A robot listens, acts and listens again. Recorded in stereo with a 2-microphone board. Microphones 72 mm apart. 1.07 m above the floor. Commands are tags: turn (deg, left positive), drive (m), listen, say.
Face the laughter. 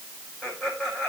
<turn deg="30"/>
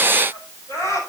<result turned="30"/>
<turn deg="140"/>
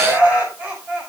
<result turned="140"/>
<turn deg="-20"/>
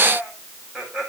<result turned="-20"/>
<turn deg="-10"/>
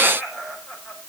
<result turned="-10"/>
<say>Facing the laughter.</say>